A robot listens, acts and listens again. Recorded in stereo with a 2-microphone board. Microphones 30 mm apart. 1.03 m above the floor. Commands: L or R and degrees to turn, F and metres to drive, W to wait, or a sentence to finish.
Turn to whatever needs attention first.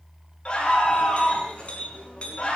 L35
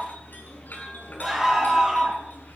Found it: a scream, straight ahead, over 4 m away.